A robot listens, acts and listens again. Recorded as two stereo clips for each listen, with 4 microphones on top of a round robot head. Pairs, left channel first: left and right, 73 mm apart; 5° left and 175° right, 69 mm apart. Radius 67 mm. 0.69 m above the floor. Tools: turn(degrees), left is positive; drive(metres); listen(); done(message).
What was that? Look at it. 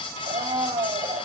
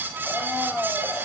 turn(degrees=-100)
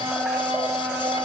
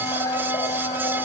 turn(degrees=-25)
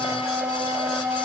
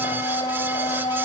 turn(degrees=-20)
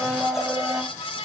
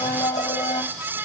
done("Found it: a blender, straight ahead, over 4 m away.")